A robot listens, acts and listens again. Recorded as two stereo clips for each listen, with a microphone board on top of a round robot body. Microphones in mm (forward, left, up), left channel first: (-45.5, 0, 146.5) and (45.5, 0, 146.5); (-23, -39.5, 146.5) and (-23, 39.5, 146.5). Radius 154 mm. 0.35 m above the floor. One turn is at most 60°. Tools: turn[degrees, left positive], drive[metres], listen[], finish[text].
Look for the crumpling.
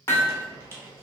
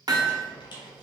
Thought: The crumpling: 60° right.
Action: turn[-60]
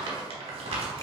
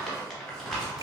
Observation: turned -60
Action: finish[Found it: crumpling, straight ahead.]